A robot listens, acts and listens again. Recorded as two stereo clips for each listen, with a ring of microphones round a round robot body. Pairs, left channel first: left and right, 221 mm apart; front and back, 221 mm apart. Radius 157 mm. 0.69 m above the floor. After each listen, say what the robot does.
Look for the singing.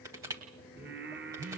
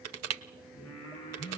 Turn 55° right.
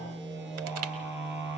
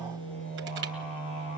Keep listening.
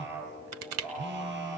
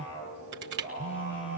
Turn 15° right.
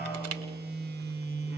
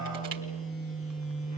Keep listening.
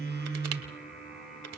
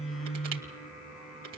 Facing the singing.